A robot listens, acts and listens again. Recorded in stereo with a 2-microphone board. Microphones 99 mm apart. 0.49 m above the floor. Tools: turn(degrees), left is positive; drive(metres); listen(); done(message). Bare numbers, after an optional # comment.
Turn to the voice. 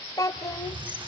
# The child speaking: about 35° left or 145° left.
turn(35)
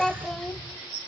done("Facing the child speaking.")